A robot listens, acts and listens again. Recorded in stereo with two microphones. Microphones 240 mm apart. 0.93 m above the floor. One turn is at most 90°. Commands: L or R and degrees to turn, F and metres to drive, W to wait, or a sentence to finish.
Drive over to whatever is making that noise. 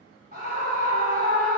R35
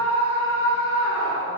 R90
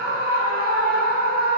R35
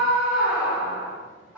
F1.0
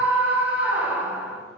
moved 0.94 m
F1.0
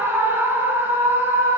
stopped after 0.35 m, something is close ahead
R10
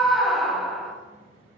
I am next to the scream.